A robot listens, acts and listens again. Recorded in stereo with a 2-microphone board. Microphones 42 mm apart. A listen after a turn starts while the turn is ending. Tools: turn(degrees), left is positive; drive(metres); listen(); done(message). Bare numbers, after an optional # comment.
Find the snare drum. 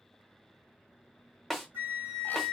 turn(30)
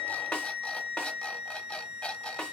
# So it is at 150° left.
turn(150)
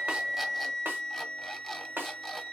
# The snare drum is now 60° right.
turn(-60)
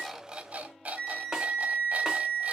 # The snare drum is now 20° right.
turn(-20)
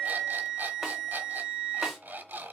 listen()
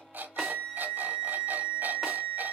listen()
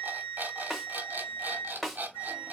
done("Facing the snare drum, 1 to 2 m away.")